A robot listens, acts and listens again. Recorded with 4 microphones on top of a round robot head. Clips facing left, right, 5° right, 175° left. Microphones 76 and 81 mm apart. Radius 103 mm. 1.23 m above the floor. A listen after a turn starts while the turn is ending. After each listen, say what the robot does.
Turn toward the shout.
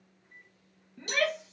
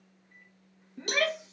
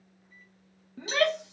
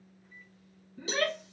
Turn 15° right.
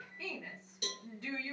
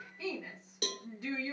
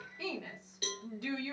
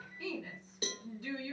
Found it: a shout, straight ahead, 1 to 2 m away.